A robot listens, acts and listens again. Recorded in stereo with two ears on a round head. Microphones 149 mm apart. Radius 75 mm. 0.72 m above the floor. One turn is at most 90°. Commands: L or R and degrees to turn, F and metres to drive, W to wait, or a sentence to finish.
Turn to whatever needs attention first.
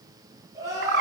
R20
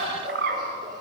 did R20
Found it: crying, straight ahead.